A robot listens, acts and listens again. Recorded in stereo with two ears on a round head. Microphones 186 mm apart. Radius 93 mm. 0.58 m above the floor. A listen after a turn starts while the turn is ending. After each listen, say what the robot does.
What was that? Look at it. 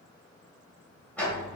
Turn 30° left.
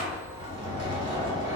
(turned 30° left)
Turn 20° right.
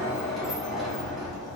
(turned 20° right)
Found it: a sliding door, straight ahead.